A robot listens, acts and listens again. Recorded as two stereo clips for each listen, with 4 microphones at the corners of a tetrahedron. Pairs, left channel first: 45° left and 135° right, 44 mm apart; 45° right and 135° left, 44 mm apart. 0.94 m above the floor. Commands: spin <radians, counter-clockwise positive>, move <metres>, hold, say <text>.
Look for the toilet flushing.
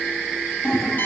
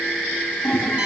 spin 0.52
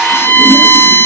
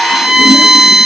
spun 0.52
hold
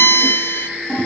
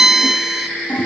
spin 0.17
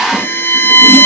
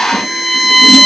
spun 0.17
hold
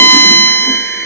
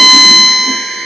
hold
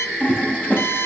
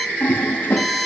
say Facing the toilet flushing, 2 to 4 m away.